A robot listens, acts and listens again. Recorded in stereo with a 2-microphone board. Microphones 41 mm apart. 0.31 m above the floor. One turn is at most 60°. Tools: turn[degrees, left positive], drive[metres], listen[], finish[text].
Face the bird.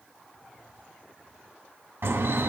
Thought: The bird: about 70° right or 110° right.
Action: turn[-60]
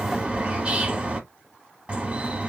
Thought: So it is at 30° right.
Action: turn[-30]
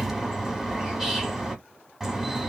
Thought: The bird is now 10° right.
Action: turn[-10]
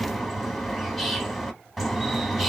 Action: finish[Found it: a bird, straight ahead, under 1 m away.]